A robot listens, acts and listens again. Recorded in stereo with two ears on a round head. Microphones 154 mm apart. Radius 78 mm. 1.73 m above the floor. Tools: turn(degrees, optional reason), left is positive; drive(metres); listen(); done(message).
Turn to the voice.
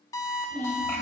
turn(degrees=30)
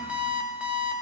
listen()
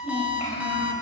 turn(degrees=135, reason="So it is at 135° left.")
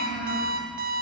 turn(degrees=45, reason="The child speaking is now 45° left.")
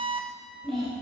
done("Found it: a child speaking, straight ahead.")